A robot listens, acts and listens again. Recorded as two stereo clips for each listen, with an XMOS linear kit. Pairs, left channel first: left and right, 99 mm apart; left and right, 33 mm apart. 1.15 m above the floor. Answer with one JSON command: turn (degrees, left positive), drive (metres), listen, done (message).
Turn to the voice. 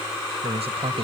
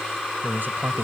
{"turn": -90}
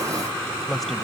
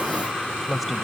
{"done": "Facing the man speaking."}